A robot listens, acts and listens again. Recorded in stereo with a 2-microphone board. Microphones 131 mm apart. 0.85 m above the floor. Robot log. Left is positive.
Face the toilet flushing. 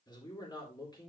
cmd idle
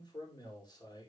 cmd idle
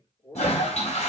note: The toilet flushing: about 60° left or 120° left.
cmd yaw +60
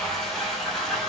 end: Facing the toilet flushing, 2 to 4 m away.